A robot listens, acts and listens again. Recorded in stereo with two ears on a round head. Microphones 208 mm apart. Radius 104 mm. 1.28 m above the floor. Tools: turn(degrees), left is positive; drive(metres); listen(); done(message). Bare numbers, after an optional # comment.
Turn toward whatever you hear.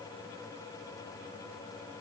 listen()
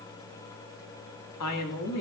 turn(90)
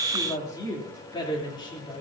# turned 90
# So it is at 20° left.
turn(20)
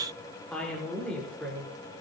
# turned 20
done("Found it: a woman speaking, straight ahead.")